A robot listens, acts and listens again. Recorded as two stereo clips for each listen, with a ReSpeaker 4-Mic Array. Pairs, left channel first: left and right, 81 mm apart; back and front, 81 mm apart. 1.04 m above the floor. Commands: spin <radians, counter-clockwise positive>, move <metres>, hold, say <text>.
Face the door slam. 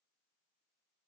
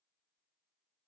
hold
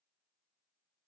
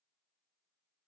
hold
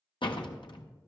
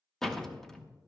spin 1.66
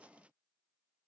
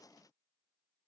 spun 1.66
say Facing where the door slam came from. I can't hear it now.